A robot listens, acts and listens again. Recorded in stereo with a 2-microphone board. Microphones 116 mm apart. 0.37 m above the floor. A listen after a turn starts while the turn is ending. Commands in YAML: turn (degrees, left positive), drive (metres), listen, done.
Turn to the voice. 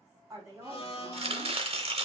turn: -30
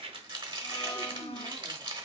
listen: true
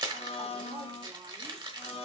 listen: true
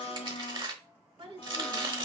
turn: -120
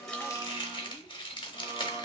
listen: true
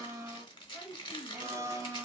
turn: -10
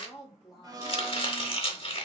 done: "Facing the woman speaking, 2 to 4 m away."